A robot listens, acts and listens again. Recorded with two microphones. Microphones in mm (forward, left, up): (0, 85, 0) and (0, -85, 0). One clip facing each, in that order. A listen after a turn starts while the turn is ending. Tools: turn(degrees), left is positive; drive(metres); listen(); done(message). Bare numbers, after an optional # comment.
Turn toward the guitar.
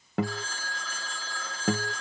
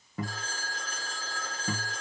turn(90)
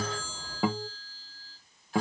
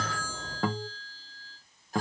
# So it is at 10° left.
turn(10)
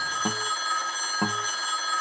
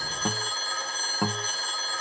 done("Found it: a guitar, straight ahead, under 1 m away.")